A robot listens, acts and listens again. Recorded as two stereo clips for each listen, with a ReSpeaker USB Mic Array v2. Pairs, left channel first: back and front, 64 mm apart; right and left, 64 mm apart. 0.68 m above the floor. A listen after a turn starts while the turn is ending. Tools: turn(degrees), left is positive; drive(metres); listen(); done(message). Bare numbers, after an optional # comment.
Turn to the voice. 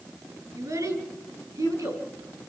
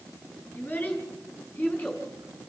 # The child speaking: 25° right.
turn(-25)
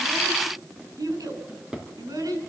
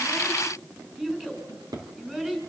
# The child speaking is now 15° left.
turn(15)
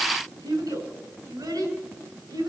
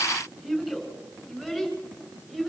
# The child speaking is now 10° left.
turn(10)
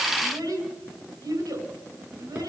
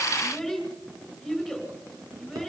done("Found it: a child speaking, straight ahead.")